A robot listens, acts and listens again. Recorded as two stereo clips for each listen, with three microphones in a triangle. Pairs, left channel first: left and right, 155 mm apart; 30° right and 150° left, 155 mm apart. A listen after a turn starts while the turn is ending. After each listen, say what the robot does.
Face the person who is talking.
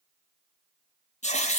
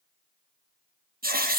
Keep listening.
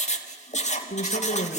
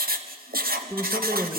Turn 75° left.
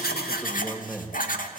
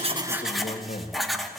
Facing the man speaking, 2 to 4 m away.